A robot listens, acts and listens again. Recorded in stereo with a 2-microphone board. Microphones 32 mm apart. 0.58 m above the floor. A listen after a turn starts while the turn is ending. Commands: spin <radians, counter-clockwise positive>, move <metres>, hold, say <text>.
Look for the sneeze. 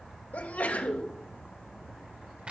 spin 1.13
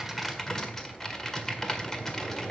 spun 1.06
hold
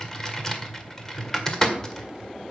say I heard a sneeze, but can't make it out now. It was about 5° left or 55° left.